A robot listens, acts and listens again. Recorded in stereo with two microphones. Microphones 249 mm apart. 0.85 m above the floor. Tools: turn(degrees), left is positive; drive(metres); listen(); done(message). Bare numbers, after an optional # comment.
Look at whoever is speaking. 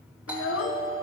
# The child speaking: about 60° left or 120° left.
turn(60)
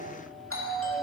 listen()
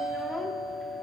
listen()
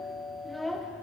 done("Facing the child speaking, under 1 m away.")